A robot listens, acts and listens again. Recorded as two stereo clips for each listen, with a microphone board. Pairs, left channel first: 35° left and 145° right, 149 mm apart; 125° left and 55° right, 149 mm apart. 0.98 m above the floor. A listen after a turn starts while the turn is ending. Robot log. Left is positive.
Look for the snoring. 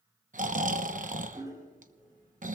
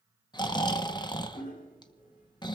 note: The snoring: 175° right.
cmd yaw -175
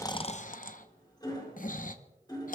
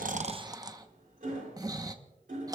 note: The snoring is now 10° left.
cmd yaw +10
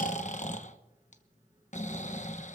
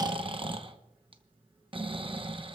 end: Found it: snoring, straight ahead, under 1 m away.